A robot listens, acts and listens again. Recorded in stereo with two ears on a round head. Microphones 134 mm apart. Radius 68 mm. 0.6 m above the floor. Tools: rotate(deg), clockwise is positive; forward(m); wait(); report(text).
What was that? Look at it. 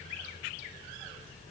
wait()
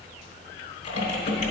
rotate(-50)
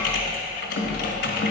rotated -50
rotate(-80)
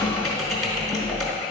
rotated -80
report("Found it: typing on a keyboard, straight ahead.")